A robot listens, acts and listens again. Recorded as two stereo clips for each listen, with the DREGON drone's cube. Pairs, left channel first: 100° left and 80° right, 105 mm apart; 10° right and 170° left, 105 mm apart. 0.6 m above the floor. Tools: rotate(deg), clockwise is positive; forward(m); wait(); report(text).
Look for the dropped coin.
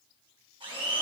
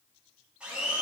wait()
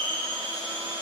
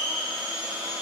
wait()
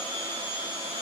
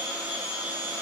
report("I can't make out a dropped coin to turn to.")